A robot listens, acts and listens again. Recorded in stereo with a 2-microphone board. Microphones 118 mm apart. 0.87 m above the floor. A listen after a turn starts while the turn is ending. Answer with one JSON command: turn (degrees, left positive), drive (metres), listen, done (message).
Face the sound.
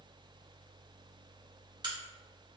{"turn": -35}
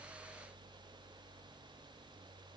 {"listen": true}
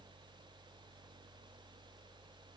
{"done": "I heard a crack, but can't make it out now. It was about straight ahead or 110° right."}